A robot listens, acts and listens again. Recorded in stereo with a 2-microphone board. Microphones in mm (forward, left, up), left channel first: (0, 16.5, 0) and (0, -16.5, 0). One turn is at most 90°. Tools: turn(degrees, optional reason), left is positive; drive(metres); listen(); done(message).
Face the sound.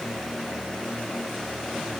listen()
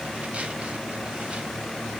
listen()
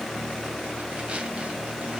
done("I can't make out anything.")